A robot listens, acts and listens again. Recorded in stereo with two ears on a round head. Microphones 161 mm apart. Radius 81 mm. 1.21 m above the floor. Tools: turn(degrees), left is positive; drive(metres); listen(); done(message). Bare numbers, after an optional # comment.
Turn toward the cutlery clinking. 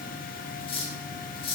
# The cutlery clinking: about 30° left or 150° left.
turn(30)
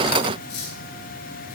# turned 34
# So it is at 115° left.
turn(115)
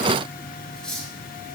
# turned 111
done("Facing the cutlery clinking, over 4 m away.")